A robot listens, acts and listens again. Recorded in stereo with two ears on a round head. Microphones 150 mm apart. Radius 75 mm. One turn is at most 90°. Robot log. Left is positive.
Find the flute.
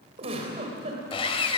cmd idle
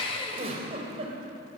cmd idle
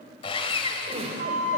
note: The flute: about 50° right or 130° right.
cmd yaw -50
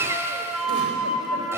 end: Found it: a flute, straight ahead, 2 to 4 m away.